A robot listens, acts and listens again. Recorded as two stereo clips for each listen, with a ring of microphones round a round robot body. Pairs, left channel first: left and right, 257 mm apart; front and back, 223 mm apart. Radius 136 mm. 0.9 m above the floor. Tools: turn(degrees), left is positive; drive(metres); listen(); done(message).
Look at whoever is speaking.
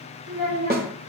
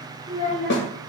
turn(degrees=-120)
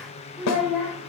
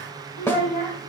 done("Found it: a child speaking, straight ahead, 2 to 4 m away.")